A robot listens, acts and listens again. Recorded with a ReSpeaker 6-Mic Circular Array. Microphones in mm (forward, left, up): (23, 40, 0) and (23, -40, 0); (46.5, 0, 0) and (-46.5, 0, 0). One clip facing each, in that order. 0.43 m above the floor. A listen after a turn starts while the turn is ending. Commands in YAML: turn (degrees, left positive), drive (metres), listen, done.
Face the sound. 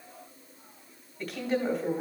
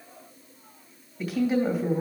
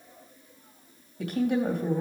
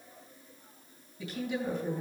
done: "Facing the woman speaking."